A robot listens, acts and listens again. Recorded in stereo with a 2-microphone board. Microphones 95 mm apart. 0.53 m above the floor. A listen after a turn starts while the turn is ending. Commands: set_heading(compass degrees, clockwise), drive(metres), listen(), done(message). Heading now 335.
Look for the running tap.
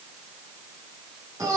listen()
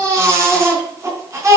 listen()
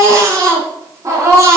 done("I can't make out a running tap to turn to.")